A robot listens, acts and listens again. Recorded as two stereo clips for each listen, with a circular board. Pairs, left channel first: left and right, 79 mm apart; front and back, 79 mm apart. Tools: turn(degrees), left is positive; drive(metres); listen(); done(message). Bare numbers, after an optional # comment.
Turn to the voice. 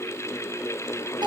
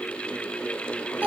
listen()
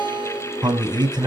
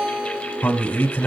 # The man speaking: 65° right.
turn(-65)
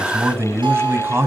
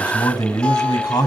# The man speaking is now 30° right.
turn(-30)
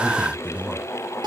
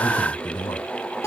# The man speaking is now 10° right.
turn(-10)
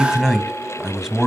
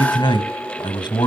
done("Found it: a man speaking, straight ahead, 2 to 4 m away.")